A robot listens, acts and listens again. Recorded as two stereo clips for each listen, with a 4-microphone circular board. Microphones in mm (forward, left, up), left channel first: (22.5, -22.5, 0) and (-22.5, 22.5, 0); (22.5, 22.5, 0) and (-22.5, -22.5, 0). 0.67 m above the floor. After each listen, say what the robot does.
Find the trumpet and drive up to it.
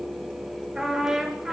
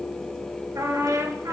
Turn 150° right.
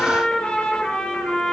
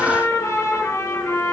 Turn 25° left.
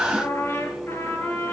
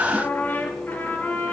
Turn 10° right.
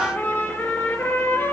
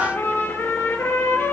Drive 1.0 m forward.
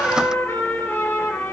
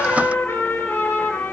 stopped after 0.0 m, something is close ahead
Something is in my way. I am facing the trumpet but have not reached it.